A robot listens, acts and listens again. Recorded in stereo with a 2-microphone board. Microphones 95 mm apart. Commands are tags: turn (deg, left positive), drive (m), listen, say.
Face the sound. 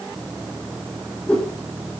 <turn deg="30"/>
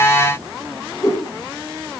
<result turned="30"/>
<turn deg="140"/>
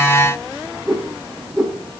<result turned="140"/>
<say>Facing the whoosh.</say>